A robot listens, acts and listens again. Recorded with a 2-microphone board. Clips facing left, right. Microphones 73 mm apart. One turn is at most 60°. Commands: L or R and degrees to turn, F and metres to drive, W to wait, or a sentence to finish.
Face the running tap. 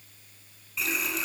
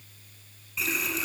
L30
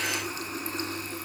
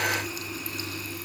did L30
L60
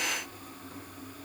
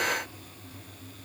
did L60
L60
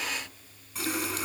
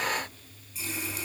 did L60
L60
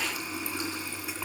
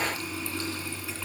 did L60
L20
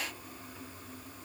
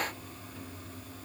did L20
Facing the running tap.